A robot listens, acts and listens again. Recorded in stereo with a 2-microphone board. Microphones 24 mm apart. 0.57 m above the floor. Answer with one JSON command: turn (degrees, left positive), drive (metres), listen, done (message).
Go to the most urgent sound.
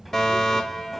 {"turn": 15}
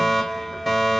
{"drive": 1.0}
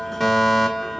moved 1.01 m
{"drive": 1.0}
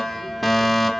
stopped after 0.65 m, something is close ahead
{"done": "Arrived at the fire alarm, straight ahead."}